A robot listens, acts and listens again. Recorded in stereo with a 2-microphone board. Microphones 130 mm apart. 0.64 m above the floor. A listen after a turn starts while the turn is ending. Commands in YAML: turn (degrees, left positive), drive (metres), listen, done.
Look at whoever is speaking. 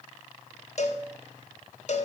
listen: true
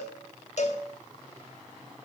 listen: true
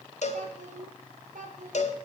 turn: -70
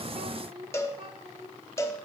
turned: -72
turn: -45
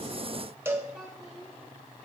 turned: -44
done: "Found it: a child speaking, straight ahead, 1 to 2 m away."